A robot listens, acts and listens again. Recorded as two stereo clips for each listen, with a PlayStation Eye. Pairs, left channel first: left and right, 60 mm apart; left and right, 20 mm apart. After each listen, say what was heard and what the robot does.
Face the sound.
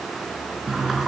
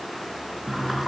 Turn 30° right.
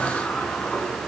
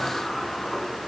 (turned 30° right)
So it is at 25° left. Turn 25° left.
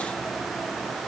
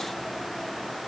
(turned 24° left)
Keep listening.
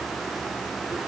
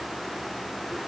Keep listening.
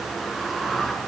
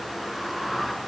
Found it: a sliding door, straight ahead, 2 to 4 m away.